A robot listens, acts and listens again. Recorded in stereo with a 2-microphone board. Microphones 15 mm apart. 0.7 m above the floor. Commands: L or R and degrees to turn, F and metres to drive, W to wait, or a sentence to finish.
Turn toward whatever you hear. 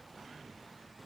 W
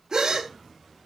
R40
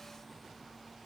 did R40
W
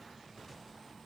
I heard a gasp, but can't make it out now. It was about straight ahead or 100° right.